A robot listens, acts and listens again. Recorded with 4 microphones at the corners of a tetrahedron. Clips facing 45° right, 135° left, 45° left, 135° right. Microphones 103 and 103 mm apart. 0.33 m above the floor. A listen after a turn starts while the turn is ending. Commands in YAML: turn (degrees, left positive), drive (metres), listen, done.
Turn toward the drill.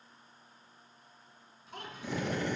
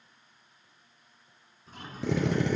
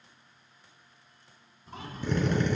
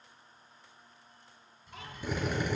turn: 145
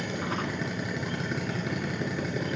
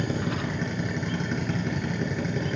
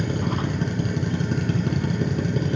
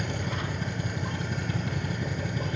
turn: 40
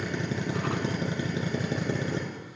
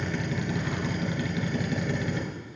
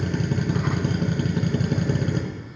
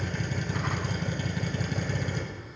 turn: 10
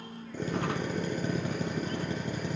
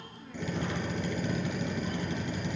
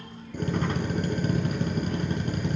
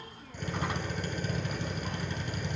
done: "Facing the drill, 2 to 4 m away."